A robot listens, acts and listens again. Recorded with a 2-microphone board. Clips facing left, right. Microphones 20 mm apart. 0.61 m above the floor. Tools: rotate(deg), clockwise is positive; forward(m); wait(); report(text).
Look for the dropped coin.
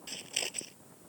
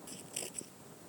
wait()
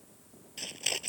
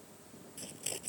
wait()
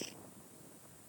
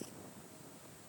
report("I can't make out a dropped coin to turn to.")